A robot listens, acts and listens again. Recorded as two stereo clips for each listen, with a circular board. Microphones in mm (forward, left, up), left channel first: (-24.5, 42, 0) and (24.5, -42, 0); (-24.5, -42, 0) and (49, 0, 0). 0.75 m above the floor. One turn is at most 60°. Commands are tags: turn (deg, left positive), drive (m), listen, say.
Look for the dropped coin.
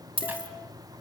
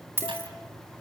<turn deg="-35"/>
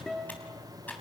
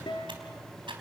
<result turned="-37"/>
<say>Facing where the dropped coin came from. I can't hear it now.</say>